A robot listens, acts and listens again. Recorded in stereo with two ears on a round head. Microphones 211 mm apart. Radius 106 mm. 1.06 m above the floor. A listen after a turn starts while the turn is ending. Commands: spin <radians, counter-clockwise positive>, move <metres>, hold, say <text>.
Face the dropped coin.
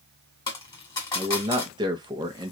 spin 0.35
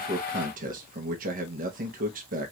hold
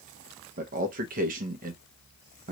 say I heard a dropped coin, but can't make it out now. It was about straight ahead or 140° left.